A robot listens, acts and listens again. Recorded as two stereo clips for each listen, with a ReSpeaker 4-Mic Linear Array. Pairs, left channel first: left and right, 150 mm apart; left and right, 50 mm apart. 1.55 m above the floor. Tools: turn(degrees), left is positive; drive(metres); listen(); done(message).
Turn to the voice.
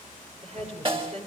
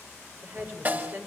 turn(degrees=-45)
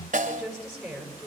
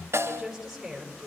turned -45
done("Facing the woman speaking.")